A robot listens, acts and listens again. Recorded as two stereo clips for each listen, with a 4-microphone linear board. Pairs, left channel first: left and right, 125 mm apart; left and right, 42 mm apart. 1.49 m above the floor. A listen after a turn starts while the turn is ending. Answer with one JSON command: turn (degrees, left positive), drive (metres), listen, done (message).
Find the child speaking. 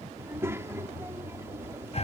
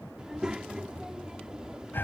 {"turn": -20}
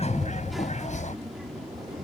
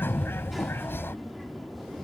{"done": "Facing the child speaking."}